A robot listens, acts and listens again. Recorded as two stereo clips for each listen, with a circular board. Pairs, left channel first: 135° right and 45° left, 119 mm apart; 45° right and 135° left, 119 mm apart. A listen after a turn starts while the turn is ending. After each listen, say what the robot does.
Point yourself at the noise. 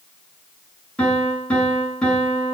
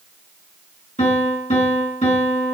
Turn 55° right.
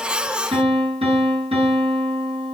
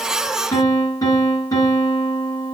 Turn 10° left.
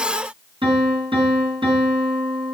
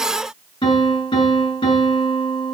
Found it: a piano, straight ahead.